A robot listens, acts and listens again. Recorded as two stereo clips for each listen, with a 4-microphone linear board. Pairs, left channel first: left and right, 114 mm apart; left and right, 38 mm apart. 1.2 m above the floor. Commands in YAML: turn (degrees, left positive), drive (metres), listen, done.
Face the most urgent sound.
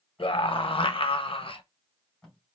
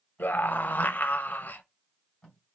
turn: 55
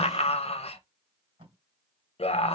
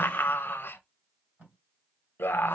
turn: 70
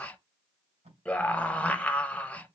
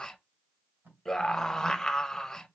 turn: 15
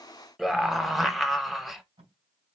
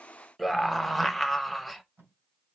done: "Found it: a scream, straight ahead, under 1 m away."